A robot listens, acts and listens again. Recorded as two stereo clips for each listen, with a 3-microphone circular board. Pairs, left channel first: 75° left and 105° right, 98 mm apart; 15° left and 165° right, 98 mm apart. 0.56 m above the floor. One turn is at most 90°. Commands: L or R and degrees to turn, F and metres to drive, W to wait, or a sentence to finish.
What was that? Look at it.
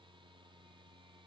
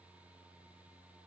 W
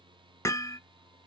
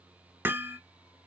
L90
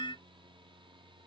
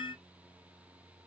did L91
L40
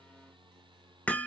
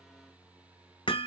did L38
Facing the hammering.